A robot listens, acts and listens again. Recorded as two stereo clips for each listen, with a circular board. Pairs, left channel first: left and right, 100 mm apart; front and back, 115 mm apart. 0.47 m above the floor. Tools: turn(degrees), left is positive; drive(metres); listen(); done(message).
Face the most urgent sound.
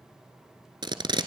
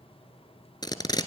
listen()
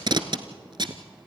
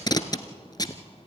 listen()
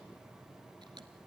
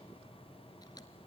done("I can't make out anything urgent to turn to.")